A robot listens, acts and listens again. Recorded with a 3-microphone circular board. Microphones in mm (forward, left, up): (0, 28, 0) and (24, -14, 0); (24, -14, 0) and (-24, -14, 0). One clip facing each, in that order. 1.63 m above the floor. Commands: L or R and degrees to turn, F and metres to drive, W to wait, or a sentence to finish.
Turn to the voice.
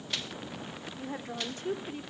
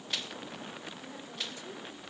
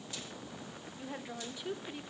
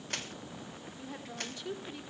L80
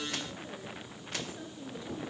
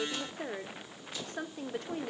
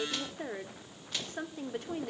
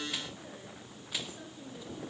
R30
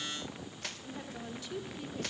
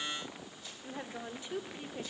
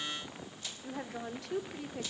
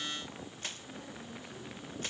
Found it: a woman speaking, straight ahead, 1 to 2 m away.